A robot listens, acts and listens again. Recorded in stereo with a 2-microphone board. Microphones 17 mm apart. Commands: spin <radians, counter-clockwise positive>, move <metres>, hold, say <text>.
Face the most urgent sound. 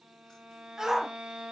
spin -0.52
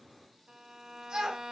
spin -2.01
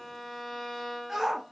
spin -0.35
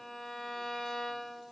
hold
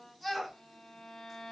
say Facing the shout.